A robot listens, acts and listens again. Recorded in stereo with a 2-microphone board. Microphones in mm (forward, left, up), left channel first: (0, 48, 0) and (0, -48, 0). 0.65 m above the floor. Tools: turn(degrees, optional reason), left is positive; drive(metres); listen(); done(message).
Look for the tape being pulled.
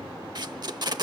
turn(degrees=-50, reason="The tape being pulled: about 50° right or 130° right.")
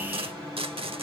turn(degrees=-80, reason="So it is at 80° right.")
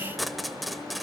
done("Facing the tape being pulled.")